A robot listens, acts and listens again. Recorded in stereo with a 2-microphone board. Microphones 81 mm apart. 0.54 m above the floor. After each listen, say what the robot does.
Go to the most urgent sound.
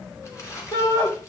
Turn 70° left.
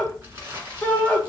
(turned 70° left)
Turn 20° left.
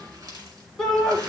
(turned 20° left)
Drive 1.0 m forward.
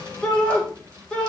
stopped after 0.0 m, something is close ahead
Turn 15° left.
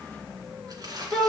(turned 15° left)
Blocked. The shout is further on, straight ahead.